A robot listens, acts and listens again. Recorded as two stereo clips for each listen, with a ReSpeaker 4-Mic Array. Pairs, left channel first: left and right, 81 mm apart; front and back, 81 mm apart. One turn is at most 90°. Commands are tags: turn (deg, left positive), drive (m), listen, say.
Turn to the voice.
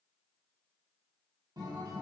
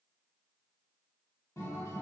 <listen/>
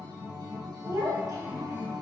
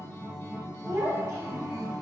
<turn deg="-90"/>
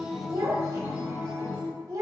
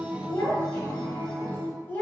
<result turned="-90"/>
<turn deg="-60"/>
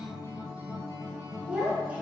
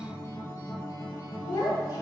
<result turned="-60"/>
<turn deg="-20"/>
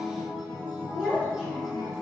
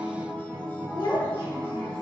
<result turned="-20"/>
<say>Facing the child speaking.</say>